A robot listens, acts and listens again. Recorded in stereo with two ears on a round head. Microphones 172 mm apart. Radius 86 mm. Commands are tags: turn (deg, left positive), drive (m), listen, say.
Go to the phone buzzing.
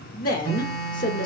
<turn deg="35"/>
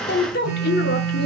<drive m="1.0"/>
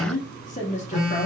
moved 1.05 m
<drive m="1.0"/>
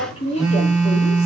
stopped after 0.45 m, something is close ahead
<say>I am next to the phone buzzing.</say>